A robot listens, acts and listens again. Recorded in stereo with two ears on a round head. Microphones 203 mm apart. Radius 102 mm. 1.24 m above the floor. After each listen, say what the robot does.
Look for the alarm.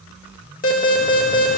Turn 40° left.
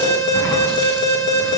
Turn 95° left.
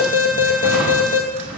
Turn 35° left.
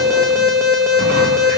Facing the alarm, 1 to 2 m away.